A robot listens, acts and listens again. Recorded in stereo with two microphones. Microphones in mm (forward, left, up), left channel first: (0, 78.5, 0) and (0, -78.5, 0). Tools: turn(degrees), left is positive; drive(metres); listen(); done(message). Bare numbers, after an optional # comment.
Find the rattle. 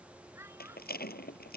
turn(90)
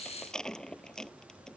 done("Found it: a rattle, straight ahead.")